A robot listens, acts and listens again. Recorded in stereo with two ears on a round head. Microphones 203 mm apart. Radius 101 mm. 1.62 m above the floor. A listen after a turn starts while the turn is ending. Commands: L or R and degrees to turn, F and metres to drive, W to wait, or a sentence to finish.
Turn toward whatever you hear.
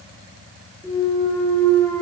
L30
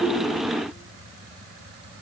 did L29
W
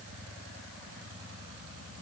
I heard a clunk, but can't make it out now. It was about 20° right or 140° left.